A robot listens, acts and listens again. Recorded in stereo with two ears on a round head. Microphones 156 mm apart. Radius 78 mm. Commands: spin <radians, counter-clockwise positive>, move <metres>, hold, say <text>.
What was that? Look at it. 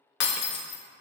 spin 1.13
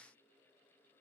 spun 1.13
hold
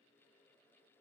say I heard breaking glass, but can't make it out now. It was about straight ahead or 50° left.